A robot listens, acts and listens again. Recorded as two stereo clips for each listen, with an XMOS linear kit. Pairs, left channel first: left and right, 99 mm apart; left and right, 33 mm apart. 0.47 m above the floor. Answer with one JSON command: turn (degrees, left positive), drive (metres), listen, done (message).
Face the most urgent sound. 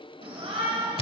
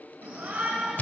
{"turn": -65}
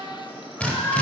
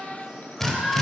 {"turn": -20}
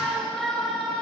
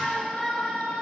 {"done": "Facing the shout, 2 to 4 m away."}